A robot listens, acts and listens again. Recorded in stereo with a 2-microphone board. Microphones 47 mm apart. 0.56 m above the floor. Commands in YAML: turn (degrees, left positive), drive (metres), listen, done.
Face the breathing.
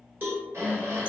turn: -70
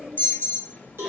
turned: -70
listen: true
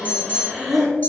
done: "Found it: breathing, straight ahead, 1 to 2 m away."